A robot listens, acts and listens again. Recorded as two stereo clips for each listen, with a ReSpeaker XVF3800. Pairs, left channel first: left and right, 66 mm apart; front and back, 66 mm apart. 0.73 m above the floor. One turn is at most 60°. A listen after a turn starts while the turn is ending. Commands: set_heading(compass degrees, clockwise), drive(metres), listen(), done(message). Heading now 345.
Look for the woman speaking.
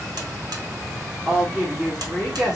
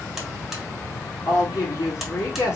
set_heading(355)
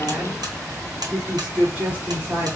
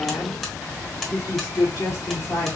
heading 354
set_heading(34)
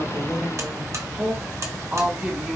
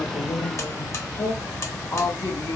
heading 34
set_heading(54)
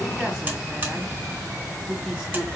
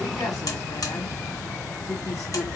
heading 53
done("Facing the woman speaking, 2 to 4 m away.")